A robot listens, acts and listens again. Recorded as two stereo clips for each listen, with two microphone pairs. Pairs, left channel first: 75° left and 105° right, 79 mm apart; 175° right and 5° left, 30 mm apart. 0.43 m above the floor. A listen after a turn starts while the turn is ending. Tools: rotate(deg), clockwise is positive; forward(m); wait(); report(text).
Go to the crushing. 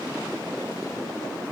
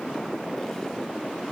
wait()
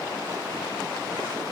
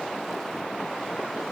wait()
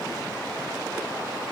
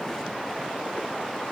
report("I can't make out crushing.")